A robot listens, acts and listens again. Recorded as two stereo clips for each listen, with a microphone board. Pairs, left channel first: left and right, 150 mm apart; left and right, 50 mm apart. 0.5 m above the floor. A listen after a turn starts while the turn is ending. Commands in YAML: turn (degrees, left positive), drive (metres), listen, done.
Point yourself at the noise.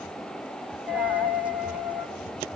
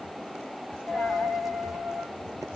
turn: -30
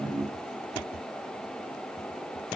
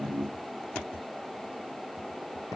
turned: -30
listen: true
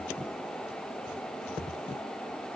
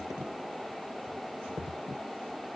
done: "I heard a dropped coin, but can't make it out now. It was about 20° left or 140° right."